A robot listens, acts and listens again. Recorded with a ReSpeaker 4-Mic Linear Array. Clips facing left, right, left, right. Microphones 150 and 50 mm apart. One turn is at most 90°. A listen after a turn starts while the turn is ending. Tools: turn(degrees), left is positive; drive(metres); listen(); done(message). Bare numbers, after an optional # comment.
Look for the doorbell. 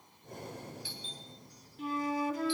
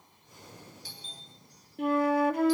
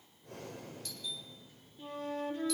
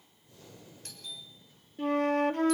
# The doorbell: about 40° right or 140° right.
turn(-40)
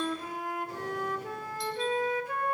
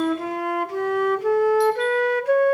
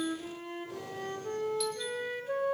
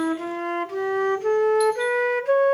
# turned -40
listen()
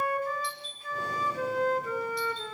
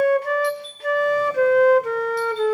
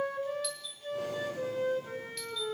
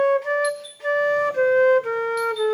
listen()
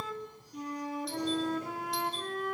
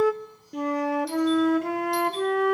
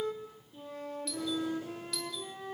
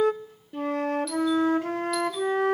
done("I heard a doorbell, but can't make it out now. It was about straight ahead or 100° right.")